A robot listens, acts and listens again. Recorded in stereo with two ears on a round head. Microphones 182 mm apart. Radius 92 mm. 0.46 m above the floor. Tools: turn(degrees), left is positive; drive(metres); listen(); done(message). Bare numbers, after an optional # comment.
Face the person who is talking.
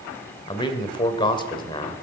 # The man speaking: about 25° left or 155° left.
turn(25)
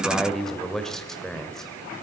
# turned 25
done("Facing the man speaking.")